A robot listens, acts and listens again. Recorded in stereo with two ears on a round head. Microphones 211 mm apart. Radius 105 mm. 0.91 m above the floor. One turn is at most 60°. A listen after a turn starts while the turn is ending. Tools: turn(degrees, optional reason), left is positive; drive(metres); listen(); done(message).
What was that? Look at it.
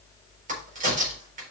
turn(degrees=-35, reason="The crack: about 35° right or 145° right.")
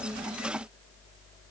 listen()
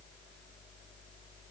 done("I heard a crack, but can't make it out now. It was about straight ahead or 110° right.")